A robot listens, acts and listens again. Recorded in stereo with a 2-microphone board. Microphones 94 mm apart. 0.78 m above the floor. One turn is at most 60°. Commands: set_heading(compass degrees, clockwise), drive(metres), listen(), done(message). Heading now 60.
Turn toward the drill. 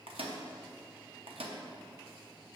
listen()
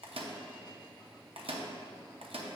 listen()
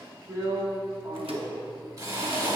set_heading(100)
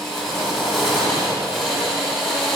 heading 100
done("Facing the drill.")